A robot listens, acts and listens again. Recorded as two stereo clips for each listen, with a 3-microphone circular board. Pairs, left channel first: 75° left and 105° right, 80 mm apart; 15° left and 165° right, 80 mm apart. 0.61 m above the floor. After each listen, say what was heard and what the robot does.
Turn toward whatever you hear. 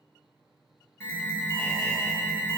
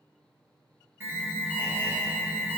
The alarm: 135° left. Turn 135° left.
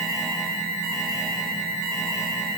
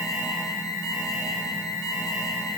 The alarm is now 10° right. Turn 10° right.
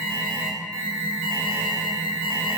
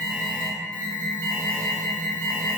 Found it: an alarm, straight ahead, 2 to 4 m away.